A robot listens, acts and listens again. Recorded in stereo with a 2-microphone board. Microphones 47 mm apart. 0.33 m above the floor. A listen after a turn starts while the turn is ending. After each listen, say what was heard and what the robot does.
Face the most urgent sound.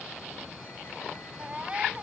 The baby crying: about 25° right or 155° right. Turn 25° right.
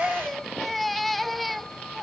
Found it: a baby crying, straight ahead.